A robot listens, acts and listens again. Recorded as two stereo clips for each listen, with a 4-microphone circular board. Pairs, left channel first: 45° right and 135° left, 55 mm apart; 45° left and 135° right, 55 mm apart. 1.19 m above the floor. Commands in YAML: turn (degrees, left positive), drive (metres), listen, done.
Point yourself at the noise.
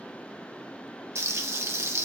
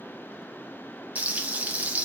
turn: 165
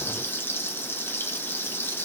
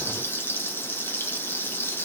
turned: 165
done: "Facing the frying, under 1 m away."